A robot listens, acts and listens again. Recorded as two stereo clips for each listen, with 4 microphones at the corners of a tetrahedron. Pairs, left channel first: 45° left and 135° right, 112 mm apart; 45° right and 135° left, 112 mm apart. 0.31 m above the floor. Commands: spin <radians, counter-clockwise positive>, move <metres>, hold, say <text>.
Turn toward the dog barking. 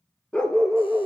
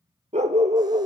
spin 2.36
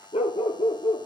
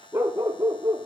spin 1.22
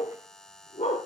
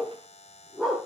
spin 0.79
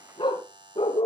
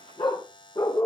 say Found it: a dog barking, straight ahead.